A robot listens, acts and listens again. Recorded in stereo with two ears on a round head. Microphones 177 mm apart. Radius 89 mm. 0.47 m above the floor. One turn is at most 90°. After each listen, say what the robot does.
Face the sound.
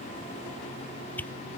Turn 30° left.
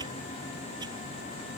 Keep listening.
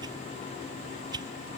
Turn 20° right.
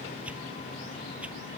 Keep listening.
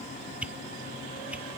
Found it: a whoosh, straight ahead.